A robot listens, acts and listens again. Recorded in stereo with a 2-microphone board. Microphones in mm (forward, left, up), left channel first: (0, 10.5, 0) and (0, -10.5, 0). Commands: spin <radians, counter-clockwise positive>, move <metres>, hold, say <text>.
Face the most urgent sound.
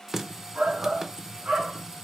spin -1.05
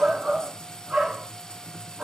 spin -1.05
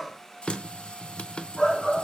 say Found it: a shout, straight ahead, 2 to 4 m away.